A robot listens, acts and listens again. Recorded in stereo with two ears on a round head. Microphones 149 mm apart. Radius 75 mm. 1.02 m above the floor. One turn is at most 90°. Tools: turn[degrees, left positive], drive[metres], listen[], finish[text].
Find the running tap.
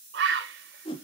Action: listen[]
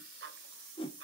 Action: listen[]
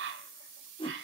Action: finish[I can't make out a running tap to turn to.]